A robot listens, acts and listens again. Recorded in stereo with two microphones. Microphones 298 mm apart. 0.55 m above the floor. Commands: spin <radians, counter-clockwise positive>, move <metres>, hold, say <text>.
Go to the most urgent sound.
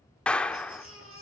spin -0.79
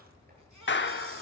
spin -1.57
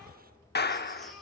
move 1.0
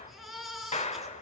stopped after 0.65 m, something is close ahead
say Blocked. The baby crying is further on, straight ahead.